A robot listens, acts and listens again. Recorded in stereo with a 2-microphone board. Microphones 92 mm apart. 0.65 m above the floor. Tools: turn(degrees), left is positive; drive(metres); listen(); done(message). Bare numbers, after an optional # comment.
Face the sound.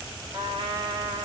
# The trumpet: about 75° right or 105° right.
turn(-75)
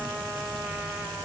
done("Found it: a trumpet, straight ahead, 1 to 2 m away.")